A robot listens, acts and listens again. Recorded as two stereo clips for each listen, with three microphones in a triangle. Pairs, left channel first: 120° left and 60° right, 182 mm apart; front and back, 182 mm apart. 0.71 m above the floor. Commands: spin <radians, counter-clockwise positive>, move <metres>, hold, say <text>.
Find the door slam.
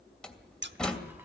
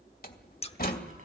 spin 0.61
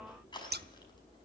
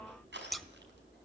say I heard a door slam from this way, but can't make it out now.